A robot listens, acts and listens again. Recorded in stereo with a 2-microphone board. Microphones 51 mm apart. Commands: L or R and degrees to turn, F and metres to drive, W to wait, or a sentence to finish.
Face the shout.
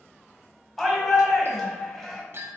L30
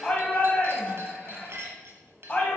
L145
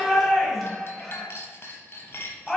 Found it: a shout, straight ahead, 1 to 2 m away.